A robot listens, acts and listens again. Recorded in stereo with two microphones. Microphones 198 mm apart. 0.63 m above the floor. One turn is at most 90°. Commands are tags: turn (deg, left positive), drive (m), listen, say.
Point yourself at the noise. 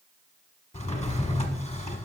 <turn deg="35"/>
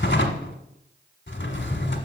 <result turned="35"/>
<turn deg="90"/>
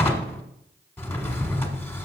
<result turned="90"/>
<turn deg="10"/>
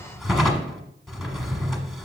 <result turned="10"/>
<say>Facing the drawer.</say>